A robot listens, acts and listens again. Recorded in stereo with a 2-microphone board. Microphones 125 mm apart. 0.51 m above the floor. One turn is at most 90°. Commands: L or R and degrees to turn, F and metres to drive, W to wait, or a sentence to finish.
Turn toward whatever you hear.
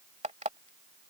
R65
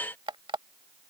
R45
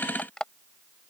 Found it: an alarm clock, straight ahead.